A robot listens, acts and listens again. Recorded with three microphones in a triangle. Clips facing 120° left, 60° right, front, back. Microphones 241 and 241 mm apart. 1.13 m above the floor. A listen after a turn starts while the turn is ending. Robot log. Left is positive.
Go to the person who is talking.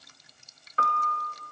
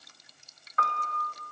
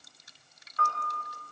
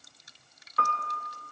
cmd idle
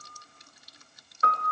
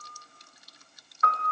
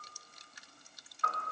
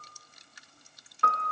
cmd idle
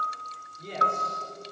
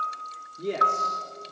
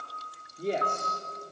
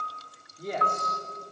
note: The man speaking: 60° right.
cmd yaw -60
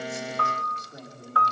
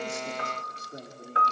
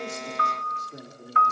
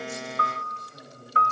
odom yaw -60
cmd fwd 1.0
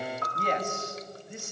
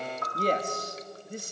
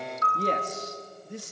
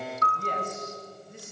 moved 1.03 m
cmd fwd 1.0
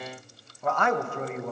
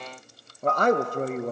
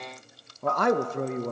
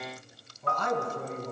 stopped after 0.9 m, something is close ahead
note: The man speaking is now 10° right.
cmd yaw -10
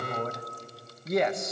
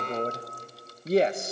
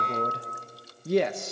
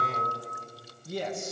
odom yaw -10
end: I am next to the man speaking.